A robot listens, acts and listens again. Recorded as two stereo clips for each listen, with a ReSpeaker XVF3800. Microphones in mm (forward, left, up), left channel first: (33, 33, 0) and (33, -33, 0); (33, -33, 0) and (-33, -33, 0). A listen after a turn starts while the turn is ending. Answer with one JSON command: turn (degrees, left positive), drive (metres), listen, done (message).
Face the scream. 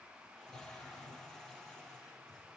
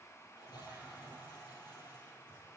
{"listen": true}
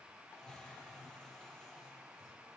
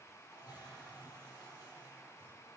{"listen": true}
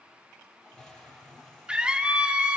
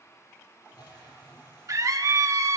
{"turn": -160}
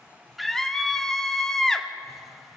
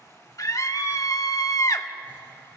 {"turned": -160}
{"turn": 10}
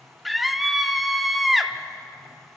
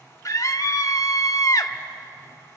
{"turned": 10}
{"done": "Found it: a scream, straight ahead."}